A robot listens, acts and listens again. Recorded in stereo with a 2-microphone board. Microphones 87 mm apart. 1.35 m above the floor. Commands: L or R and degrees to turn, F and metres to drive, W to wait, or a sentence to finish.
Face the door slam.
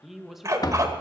L50
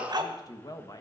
W
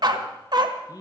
I heard a door slam, but can't make it out now. It was about straight ahead or 80° left.